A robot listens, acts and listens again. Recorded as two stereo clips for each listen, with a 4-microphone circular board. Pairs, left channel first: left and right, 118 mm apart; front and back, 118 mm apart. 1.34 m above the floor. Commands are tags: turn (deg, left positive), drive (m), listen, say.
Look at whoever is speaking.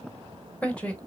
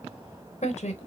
<turn deg="10"/>
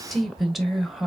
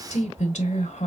<say>Facing the woman speaking, 1 to 2 m away.</say>